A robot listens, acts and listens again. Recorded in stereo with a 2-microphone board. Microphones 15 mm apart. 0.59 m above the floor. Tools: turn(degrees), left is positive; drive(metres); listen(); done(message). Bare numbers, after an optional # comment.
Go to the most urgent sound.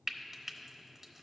listen()
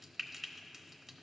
listen()
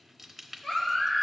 # The baby crying: about 70° left or 110° left.
turn(70)
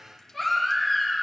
drive(1.0)
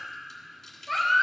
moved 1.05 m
drive(1.0)
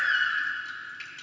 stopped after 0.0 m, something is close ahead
done("I am next to the baby crying.")